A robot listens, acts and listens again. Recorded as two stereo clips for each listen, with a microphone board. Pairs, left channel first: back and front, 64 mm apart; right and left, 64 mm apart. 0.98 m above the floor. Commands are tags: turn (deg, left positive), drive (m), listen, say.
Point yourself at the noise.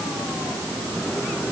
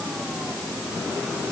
<listen/>
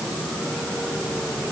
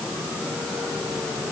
<listen/>
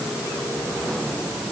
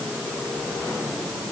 <say>I can't make out anything.</say>